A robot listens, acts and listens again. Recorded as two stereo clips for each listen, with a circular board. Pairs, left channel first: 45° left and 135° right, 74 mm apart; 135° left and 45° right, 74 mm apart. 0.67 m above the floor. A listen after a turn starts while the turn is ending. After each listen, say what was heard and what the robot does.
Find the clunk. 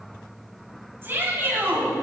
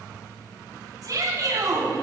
Keep listening.
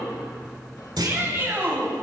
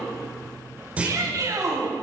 The clunk: 115° right. Turn 115° right.
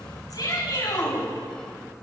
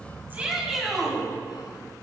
I heard a clunk from this way, but can't make it out now.